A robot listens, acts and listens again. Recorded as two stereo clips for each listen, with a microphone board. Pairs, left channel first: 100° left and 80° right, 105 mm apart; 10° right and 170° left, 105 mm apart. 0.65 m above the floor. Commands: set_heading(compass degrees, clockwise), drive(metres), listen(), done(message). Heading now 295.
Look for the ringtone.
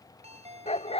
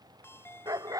set_heading(15)
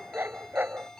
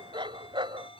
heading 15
set_heading(0)
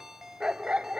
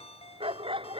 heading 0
done("Found it: a ringtone, straight ahead.")